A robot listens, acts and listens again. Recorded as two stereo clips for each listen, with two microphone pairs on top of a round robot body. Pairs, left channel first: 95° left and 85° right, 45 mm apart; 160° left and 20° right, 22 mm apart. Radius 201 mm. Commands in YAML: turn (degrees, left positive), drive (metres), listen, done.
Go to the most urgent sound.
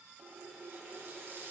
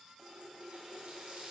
listen: true
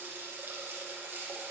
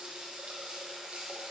listen: true
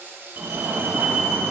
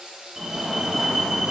turn: -100
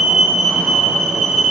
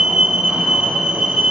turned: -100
drive: 1.0
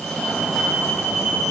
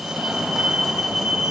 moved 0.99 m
turn: 15
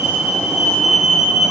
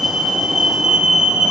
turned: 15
drive: 1.0
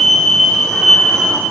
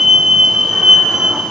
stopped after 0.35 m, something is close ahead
turn: 20
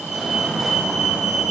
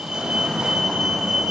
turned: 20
done: "Arrived at the fire alarm, straight ahead."